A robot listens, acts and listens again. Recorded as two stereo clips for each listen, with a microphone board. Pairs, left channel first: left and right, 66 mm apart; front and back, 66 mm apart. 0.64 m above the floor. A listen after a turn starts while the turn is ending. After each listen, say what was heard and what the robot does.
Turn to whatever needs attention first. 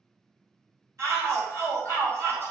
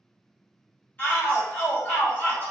The shout: 60° right. Turn 60° right.
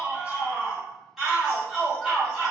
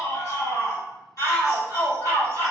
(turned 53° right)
Found it: a shout, straight ahead.